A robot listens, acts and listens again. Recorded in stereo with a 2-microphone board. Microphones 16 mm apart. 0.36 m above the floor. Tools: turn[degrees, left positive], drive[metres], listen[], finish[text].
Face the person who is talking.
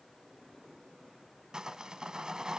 Action: listen[]
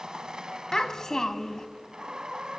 Thought: The child speaking: about 40° left or 140° left.
Action: turn[40]
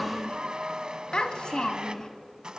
Thought: So it is at 100° left.
Action: turn[100]
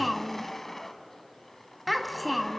Action: finish[Facing the child speaking.]